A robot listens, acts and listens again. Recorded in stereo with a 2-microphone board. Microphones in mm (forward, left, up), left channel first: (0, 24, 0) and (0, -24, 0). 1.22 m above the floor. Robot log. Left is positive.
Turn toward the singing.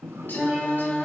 note: The singing: about 35° left or 145° left.
cmd yaw +35
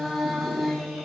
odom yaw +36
end: Facing the singing, over 4 m away.